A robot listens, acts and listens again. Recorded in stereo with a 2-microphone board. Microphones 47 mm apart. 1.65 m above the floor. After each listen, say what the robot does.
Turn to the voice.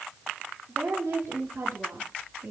Turn 90° right.
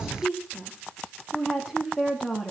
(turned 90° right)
Found it: a woman speaking, straight ahead, 2 to 4 m away.